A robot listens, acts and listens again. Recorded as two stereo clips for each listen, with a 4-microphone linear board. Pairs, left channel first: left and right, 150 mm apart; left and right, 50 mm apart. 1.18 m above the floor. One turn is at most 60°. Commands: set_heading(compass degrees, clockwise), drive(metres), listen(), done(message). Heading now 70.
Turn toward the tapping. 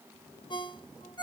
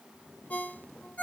listen()
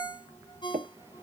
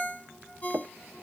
set_heading(130)
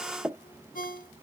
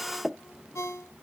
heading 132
set_heading(147)
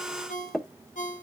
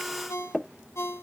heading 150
done("Facing the tapping.")